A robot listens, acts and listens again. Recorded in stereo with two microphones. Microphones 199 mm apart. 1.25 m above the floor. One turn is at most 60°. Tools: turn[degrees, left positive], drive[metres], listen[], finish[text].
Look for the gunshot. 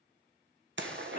Thought: The gunshot: about 70° right or 110° right.
Action: turn[-60]
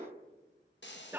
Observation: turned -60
Thought: So it is at 40° right.
Action: turn[-40]
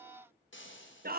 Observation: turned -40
Action: finish[I heard a gunshot from this way, but can't make it out now.]